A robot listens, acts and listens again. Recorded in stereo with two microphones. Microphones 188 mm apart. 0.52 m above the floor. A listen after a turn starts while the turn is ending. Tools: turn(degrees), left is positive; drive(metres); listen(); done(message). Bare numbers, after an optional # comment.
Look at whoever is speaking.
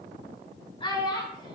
# The child speaking: about 25° left or 155° left.
turn(25)
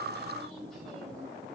listen()
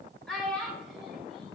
done("Found it: a child speaking, straight ahead, 1 to 2 m away.")